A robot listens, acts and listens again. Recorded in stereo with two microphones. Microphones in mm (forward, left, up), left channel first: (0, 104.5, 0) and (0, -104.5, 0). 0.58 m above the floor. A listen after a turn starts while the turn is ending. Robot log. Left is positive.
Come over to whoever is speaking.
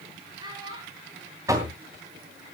note: The child speaking: about 20° right or 160° right.
cmd yaw -20
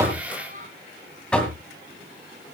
note: So it is at 135° right.
cmd yaw -135
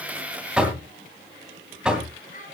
note: The child speaking is now 40° left.
cmd yaw +40
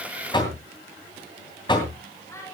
note: The child speaking is now 15° left.
cmd yaw +15
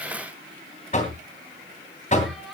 cmd fwd 1.0
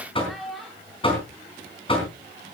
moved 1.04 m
cmd fwd 1.0
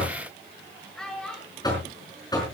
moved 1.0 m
cmd fwd 1.0
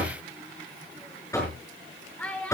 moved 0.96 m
note: The child speaking is now 10° left.
cmd yaw +10
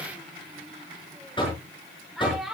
cmd fwd 1.0
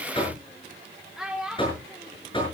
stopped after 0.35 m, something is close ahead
end: I am next to the child speaking.